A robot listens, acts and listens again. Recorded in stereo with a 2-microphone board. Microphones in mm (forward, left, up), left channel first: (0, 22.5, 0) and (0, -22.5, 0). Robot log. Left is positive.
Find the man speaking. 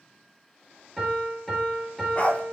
cmd idle
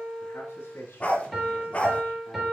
note: The man speaking: about 70° left or 110° left.
cmd yaw +70
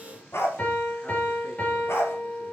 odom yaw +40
cmd idle
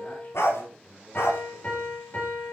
note: So it is at 30° left.
cmd yaw +30
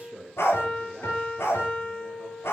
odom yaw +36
end: Found it: a man speaking, straight ahead.